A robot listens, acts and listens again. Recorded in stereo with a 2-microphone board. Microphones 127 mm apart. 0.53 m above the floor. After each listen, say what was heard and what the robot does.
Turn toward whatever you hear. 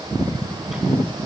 Keep listening.
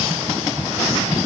Keep listening.
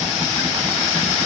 I can't make out anything.